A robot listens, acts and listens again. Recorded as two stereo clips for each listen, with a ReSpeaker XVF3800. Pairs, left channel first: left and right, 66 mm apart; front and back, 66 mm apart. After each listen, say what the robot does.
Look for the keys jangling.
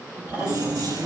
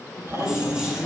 Turn 105° right.
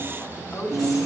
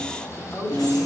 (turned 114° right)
Found it: keys jangling, straight ahead.